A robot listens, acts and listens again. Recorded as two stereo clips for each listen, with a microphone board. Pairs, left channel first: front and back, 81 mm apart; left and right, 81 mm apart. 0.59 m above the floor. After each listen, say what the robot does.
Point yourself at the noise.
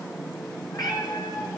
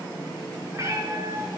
Turn 40° right.
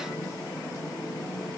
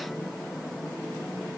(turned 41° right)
Keep listening.
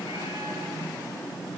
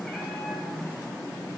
Keep listening.
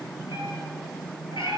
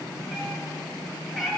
Facing the cat meowing, over 4 m away.